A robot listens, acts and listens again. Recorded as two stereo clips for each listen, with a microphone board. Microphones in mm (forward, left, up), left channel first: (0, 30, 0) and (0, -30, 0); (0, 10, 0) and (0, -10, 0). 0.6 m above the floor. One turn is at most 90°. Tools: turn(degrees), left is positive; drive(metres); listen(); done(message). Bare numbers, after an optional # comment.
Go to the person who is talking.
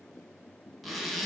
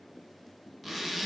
listen()
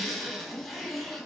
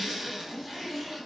listen()
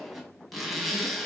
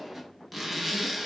done("I can't make out anyone speaking to turn to.")